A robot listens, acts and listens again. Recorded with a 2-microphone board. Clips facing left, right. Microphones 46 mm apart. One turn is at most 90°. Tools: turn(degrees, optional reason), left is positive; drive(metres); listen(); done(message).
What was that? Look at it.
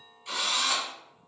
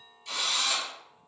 turn(degrees=20, reason="The drill: about 20° left or 160° left.")
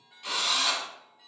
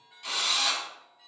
done("Found it: a drill, straight ahead.")